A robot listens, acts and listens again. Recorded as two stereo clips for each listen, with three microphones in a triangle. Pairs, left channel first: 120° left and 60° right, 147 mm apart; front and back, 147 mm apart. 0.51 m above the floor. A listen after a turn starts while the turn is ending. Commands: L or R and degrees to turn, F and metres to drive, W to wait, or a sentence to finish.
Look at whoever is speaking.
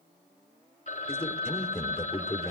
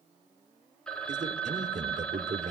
L160
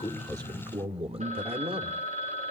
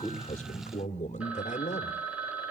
R20
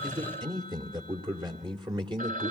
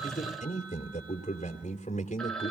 R10
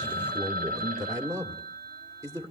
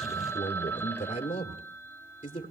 Found it: a man speaking, straight ahead, 1 to 2 m away.